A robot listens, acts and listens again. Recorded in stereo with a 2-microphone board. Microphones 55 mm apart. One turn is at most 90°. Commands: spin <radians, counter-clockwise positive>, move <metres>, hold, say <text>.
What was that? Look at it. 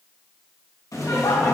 spin 1.31
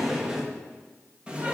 spin -0.35
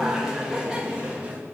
spin -0.35
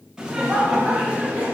spin -0.44
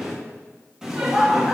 spin -0.17
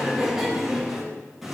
say Found it: laughter, straight ahead, 1 to 2 m away.